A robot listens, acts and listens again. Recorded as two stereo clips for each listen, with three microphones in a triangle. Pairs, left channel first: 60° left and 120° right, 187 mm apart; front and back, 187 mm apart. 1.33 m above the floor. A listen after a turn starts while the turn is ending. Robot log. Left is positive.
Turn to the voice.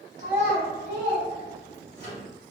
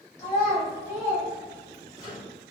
note: The child speaking: 75° right.
cmd yaw -75
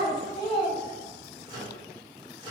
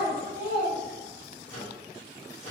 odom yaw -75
end: Facing the child speaking.